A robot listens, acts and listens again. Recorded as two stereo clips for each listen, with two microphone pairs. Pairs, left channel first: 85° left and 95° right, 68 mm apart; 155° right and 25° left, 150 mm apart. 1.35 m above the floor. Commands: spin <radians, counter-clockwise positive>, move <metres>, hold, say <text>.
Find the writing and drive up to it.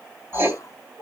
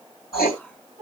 spin -2.62
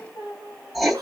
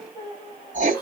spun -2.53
move 1.0
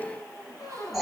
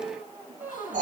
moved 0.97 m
spin -0.17
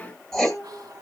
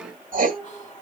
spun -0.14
move 1.0
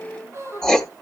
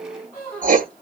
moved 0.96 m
move 1.0
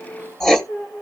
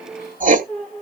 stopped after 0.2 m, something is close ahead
say Arrived at the writing, straight ahead.